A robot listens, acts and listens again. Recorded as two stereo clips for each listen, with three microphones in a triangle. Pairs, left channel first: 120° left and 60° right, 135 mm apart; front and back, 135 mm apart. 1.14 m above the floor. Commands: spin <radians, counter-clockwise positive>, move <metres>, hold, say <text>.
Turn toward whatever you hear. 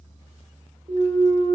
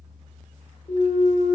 spin -0.52
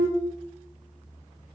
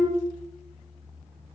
say Facing the clunk.